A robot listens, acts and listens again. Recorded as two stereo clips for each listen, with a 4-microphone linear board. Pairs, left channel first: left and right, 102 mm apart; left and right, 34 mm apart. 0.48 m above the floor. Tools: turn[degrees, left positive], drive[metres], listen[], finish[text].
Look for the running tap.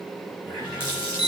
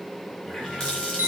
Thought: The running tap: about 25° left or 155° left.
Action: turn[25]
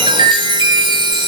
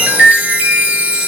Action: listen[]
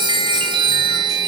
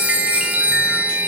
Action: listen[]
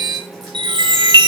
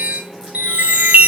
Action: finish[I heard a running tap, but can't make it out now. It was about straight ahead or 130° left.]